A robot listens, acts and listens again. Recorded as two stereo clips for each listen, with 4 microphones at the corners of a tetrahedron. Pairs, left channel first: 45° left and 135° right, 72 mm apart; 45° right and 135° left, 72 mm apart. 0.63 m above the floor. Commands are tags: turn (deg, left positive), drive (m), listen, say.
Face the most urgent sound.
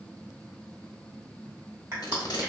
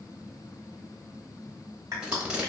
<listen/>
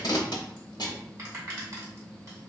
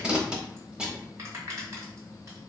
<listen/>
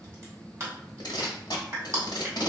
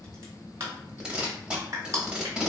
<say>I can't make out anything urgent to turn to.</say>